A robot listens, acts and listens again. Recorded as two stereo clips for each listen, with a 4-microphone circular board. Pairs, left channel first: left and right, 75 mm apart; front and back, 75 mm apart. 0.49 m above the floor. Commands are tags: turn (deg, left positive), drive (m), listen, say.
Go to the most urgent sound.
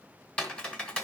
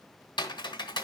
<listen/>
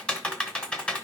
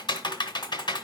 <listen/>
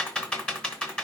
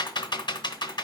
<say>I can't make out anything urgent, only typing on a keyboard.</say>